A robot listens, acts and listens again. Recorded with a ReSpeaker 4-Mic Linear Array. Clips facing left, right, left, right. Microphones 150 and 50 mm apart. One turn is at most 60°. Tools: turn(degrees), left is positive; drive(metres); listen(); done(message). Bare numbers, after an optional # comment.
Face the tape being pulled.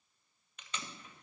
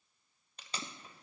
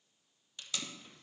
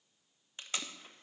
# The tape being pulled: about 35° right or 145° right.
turn(-35)
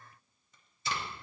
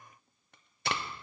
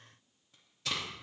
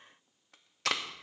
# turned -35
# So it is at 110° right.
turn(-60)
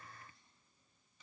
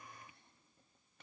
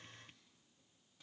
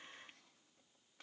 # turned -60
# Nothing new. It was at 50° right.
turn(-50)
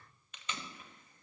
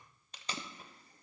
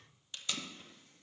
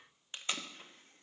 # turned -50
# The tape being pulled is now 35° right.
turn(-35)
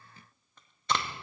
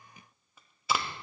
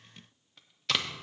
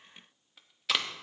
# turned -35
done("Found it: tape being pulled, straight ahead, 1 to 2 m away.")